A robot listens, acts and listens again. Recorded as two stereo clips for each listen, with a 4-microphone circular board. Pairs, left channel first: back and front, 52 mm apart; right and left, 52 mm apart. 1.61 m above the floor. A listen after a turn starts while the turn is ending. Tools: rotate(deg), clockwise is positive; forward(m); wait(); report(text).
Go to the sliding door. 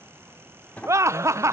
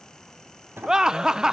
rotate(-125)
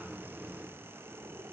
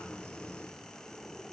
forward(1.0)
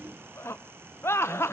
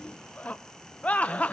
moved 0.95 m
wait()
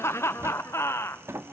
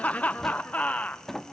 rotate(10)
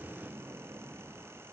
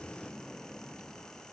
forward(1.0)
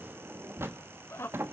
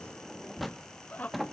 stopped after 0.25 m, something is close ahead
report("Arrived at the sliding door, straight ahead.")